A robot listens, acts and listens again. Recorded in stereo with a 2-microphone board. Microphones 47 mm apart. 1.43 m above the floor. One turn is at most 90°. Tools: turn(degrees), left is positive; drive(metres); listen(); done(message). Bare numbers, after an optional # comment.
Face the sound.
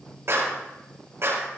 # The clap: about 60° right or 120° right.
turn(-60)
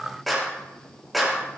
done("Found it: a clap, straight ahead.")